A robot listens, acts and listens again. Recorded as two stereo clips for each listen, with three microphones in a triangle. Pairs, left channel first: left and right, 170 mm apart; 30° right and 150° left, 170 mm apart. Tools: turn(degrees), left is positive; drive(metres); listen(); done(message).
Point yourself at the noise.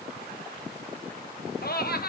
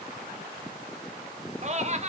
turn(degrees=105)
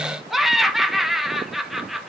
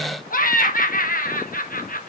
done("Facing the laughter, 1 to 2 m away.")